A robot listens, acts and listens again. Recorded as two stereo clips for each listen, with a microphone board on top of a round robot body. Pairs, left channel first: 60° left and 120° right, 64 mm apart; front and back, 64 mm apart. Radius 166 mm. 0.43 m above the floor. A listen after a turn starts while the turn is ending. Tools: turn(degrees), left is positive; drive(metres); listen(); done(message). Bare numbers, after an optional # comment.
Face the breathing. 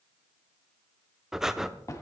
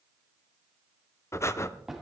# The breathing: 40° right.
turn(-40)
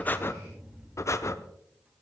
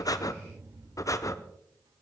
# The breathing is now 25° left.
turn(25)
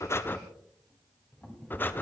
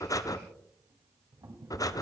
done("Facing the breathing, 1 to 2 m away.")